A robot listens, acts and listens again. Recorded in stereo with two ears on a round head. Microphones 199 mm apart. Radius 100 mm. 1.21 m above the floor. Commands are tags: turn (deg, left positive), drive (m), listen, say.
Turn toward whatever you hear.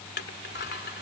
<turn deg="55"/>
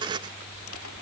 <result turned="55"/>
<turn deg="75"/>
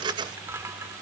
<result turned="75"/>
<turn deg="-15"/>
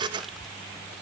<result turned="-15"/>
<say>Facing the crushing.</say>